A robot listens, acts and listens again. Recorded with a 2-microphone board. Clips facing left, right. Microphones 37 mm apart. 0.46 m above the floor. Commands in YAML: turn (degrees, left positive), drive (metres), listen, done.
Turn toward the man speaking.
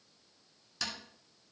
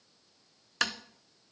listen: true
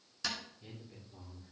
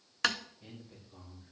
turn: -25
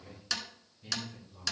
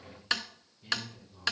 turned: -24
turn: -30
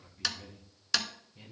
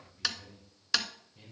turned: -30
done: "Facing the man speaking, 2 to 4 m away."